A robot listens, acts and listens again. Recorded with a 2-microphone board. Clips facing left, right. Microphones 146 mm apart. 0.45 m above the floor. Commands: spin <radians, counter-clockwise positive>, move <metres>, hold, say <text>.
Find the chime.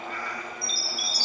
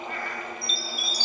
spin -0.35
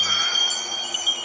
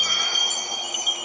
say Facing the chime, 1 to 2 m away.